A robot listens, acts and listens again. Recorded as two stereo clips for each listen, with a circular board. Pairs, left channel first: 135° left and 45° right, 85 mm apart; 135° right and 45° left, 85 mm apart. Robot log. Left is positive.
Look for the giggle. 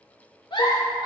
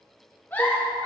note: The giggle: 155° left.
cmd yaw +155
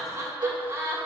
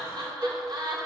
note: The giggle is now 10° left.
cmd yaw +10
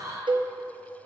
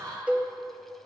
end: Found it: a giggle, straight ahead, 1 to 2 m away.